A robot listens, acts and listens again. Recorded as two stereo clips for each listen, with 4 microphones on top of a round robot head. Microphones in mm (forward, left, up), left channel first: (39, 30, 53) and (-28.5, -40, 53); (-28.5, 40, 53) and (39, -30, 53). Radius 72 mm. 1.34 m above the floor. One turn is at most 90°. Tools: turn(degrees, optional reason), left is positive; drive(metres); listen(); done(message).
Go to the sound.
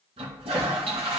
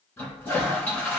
turn(degrees=-90, reason="The toilet flushing: 155° right.")
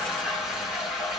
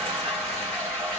turn(degrees=-50, reason="The toilet flushing is now 50° right.")
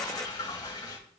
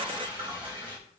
drive(metres=1.0)
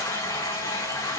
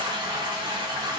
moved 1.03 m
turn(degrees=-10, reason="The toilet flushing is now 10° right.")
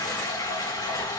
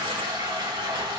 drive(metres=1.0)
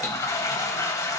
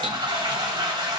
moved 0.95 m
turn(degrees=-10, reason="The toilet flushing is now 10° right.")
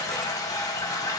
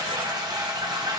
drive(metres=1.0)
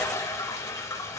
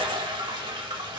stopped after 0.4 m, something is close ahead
turn(degrees=-10, reason="The toilet flushing is now 10° right.")
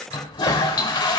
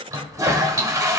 done("I am next to the toilet flushing.")